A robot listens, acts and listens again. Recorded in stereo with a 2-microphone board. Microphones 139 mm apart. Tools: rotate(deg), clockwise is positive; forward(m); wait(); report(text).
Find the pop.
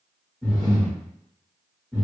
wait()
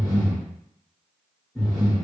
wait()
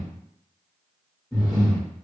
report("I can't make out a pop, only breathing.")